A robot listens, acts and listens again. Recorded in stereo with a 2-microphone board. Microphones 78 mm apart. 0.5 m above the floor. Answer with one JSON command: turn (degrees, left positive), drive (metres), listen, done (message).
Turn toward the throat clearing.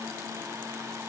{"listen": true}
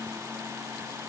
{"listen": true}
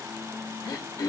{"turn": 50}
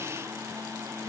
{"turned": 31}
{"listen": true}
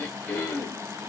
{"turn": 30}
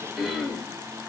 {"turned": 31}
{"done": "Found it: throat clearing, straight ahead, under 1 m away."}